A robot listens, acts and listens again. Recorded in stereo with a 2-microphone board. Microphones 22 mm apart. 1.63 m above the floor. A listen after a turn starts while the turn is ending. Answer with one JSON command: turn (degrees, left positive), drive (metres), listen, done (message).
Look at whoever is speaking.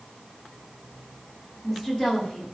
{"turn": 20}
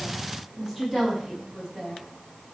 {"turn": 30}
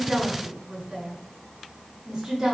{"turn": -25}
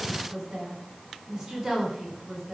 {"turn": -15}
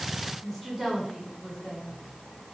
{"done": "Facing the woman speaking."}